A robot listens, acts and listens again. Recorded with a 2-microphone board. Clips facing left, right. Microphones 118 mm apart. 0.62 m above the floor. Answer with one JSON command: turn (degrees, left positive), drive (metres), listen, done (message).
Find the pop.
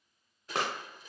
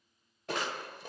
{"turn": 70}
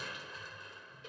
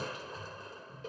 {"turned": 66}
{"listen": true}
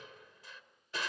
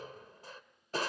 {"done": "I heard a pop, but can't make it out now. It was about 5° left or 45° left."}